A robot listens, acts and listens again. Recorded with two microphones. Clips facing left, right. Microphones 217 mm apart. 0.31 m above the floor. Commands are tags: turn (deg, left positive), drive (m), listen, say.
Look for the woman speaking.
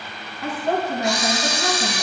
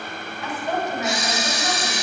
<turn deg="60"/>
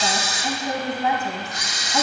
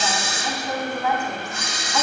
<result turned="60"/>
<turn deg="25"/>
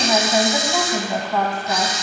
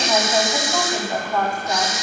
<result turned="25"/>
<say>Facing the woman speaking, 2 to 4 m away.</say>